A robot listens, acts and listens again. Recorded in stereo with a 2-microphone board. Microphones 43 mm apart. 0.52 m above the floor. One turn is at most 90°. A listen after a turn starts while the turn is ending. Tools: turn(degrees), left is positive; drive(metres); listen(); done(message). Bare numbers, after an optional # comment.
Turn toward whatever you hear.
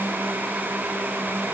listen()
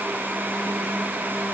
listen()
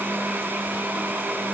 done("I can't make out anything.")